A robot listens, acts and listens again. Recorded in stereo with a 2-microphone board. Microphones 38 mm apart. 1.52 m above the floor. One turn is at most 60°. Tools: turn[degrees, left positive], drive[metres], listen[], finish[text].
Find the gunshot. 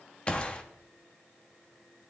Thought: The gunshot: about 30° left or 150° left.
Action: turn[30]
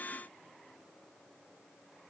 Action: listen[]
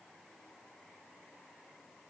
Action: finish[I heard a gunshot, but can't make it out now. It was about straight ahead or 120° left.]